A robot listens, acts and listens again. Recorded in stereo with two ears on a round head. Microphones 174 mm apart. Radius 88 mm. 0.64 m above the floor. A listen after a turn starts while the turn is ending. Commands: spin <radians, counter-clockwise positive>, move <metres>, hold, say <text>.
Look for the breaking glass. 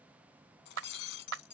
spin 1.05
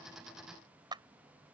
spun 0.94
hold
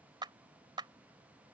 say I heard breaking glass, but can't make it out now. It was about 10° left or 65° left.